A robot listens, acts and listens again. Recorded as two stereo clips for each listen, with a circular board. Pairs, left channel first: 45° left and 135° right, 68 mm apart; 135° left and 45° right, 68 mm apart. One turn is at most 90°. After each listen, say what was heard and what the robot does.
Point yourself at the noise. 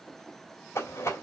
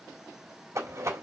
Facing the rattle, 2 to 4 m away.